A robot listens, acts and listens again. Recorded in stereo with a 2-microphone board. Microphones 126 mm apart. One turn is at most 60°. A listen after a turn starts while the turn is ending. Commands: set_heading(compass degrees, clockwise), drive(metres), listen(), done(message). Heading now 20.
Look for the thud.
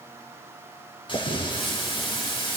set_heading(325)
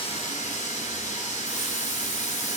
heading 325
listen()
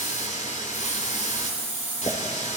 done("I heard a thud, but can't make it out now. It was about straight ahead or 70° left.")